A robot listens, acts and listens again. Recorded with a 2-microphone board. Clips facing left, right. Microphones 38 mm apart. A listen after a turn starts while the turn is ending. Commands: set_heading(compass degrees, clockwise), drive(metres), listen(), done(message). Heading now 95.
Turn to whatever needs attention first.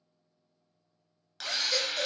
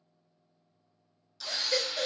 set_heading(115)
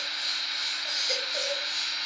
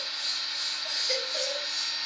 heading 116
done("Found it: a baby crying, straight ahead.")